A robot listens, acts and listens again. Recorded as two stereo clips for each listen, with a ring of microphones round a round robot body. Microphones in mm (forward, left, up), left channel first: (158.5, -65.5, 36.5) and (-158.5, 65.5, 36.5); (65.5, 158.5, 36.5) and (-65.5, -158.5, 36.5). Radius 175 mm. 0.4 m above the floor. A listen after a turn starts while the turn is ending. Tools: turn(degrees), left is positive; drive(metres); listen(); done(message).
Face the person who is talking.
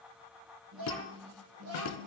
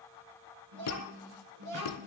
turn(degrees=-150)
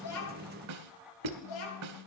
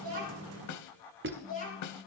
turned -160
done("Found it: a child speaking, straight ahead, over 4 m away.")